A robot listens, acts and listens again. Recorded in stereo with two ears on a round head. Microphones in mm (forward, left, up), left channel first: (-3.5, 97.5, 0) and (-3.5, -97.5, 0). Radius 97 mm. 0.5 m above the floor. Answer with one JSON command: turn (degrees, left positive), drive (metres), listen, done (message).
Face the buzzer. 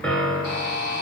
{"turn": 55}
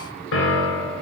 {"listen": true}
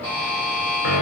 {"turn": 10}
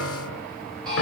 {"done": "Facing the buzzer."}